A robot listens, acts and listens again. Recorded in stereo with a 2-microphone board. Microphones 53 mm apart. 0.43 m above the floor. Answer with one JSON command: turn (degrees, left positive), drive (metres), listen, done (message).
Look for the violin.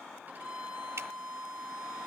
{"turn": -35}
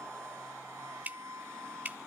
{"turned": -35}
{"turn": -110}
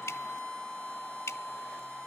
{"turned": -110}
{"done": "Found it: a violin, straight ahead."}